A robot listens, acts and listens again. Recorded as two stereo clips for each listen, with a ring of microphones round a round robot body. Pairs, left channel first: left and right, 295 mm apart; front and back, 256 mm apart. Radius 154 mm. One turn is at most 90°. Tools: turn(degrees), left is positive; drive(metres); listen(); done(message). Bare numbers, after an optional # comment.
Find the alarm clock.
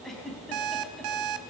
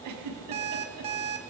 # The alarm clock: 110° right.
turn(-90)
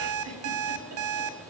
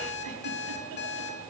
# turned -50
# The alarm clock is now 55° right.
turn(-55)
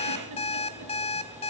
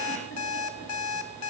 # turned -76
# The alarm clock is now 20° left.
turn(20)
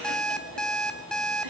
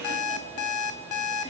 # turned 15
done("Found it: an alarm clock, straight ahead, 1 to 2 m away.")